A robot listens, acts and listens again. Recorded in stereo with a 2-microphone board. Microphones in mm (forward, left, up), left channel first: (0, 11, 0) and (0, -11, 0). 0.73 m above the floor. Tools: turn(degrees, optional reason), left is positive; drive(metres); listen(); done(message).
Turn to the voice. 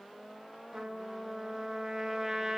listen()
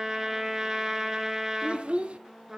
turn(degrees=-65, reason="The child speaking: about 65° right or 115° right.")
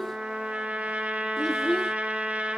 done("Found it: a child speaking, straight ahead, 1 to 2 m away.")